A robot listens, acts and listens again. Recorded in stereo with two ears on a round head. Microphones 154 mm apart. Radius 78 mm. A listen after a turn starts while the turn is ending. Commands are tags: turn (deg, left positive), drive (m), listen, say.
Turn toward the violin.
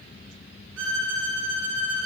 <turn deg="-90"/>
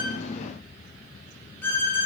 <turn deg="10"/>
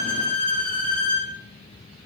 <turn deg="10"/>
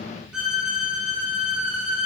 <say>Found it: a violin, straight ahead.</say>